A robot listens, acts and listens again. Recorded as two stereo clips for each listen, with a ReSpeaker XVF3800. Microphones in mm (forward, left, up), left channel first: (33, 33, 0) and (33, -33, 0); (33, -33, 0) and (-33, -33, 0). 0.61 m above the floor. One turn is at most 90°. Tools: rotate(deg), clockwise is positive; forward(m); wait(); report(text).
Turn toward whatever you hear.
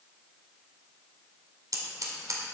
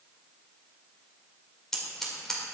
rotate(85)
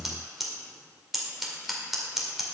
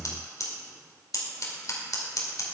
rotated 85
report("Found it: scissors, straight ahead, 1 to 2 m away.")